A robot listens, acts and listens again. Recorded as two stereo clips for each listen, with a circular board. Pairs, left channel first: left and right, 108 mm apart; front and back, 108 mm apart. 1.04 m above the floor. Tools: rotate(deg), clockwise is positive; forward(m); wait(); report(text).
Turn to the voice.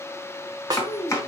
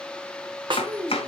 rotate(-105)
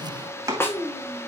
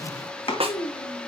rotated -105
rotate(-40)
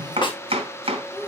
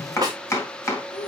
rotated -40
rotate(-10)
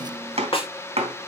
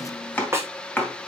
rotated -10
wait()
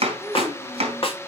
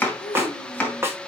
report("Facing the child speaking, 2 to 4 m away.")